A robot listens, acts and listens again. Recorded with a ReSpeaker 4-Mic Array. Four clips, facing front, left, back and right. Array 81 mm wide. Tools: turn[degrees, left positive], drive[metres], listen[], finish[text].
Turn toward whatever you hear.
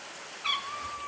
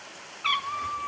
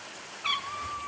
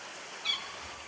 Thought: The cat meowing: 95° left.
Action: turn[95]
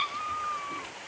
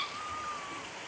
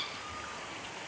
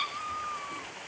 Thought: The cat meowing is now 15° right.
Action: turn[-15]
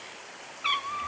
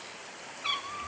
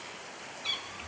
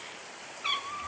Action: finish[Found it: a cat meowing, straight ahead, under 1 m away.]